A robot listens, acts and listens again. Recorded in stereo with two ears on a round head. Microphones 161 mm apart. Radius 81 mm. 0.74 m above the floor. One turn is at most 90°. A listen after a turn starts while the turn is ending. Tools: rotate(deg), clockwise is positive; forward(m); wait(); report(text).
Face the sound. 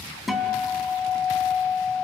rotate(-30)
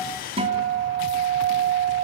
rotate(30)
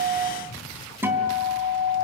rotate(10)
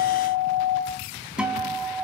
report("Found it: a guitar, straight ahead.")